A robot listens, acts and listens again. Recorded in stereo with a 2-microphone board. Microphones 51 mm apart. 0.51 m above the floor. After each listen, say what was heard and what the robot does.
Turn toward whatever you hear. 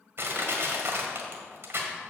The crushing: about 55° right or 125° right. Turn 55° right.
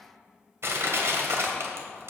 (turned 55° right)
So it is at 70° right. Turn 70° right.
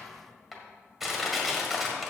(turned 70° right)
Facing the crushing.